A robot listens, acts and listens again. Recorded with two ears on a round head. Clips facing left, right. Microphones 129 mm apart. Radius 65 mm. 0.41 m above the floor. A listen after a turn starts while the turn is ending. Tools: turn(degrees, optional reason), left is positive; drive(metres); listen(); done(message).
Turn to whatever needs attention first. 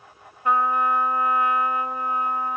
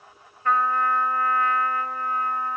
listen()
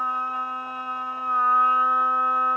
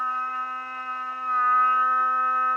listen()
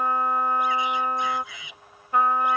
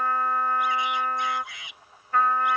turn(degrees=90)
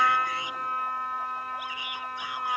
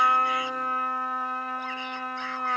listen()
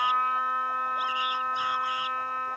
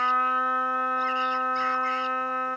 listen()
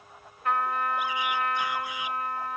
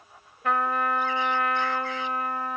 done("I heard a shout from this way, but can't make it out now.")